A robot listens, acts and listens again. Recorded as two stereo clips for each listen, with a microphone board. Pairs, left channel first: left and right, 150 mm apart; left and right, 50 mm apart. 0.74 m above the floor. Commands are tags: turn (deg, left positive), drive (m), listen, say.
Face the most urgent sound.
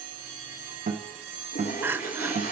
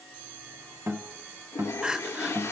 <turn deg="-30"/>
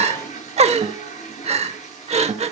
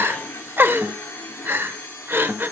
<turn deg="-135"/>
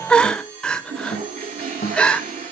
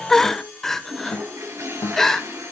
<say>Found it: crying, straight ahead.</say>